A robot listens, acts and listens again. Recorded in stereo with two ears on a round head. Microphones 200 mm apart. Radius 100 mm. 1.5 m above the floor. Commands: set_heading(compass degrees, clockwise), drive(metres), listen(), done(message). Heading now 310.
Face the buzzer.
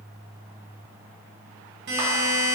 set_heading(0)
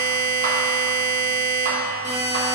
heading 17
set_heading(2)
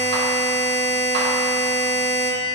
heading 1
done("Found it: a buzzer, straight ahead, 1 to 2 m away.")